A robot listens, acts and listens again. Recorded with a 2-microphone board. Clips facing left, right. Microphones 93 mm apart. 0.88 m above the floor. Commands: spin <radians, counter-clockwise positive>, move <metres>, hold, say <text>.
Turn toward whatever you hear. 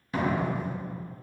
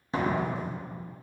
spin -0.44
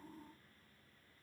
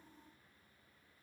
hold
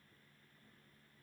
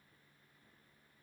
say I heard a door slam, but can't make it out now. It was about straight ahead or 130° right.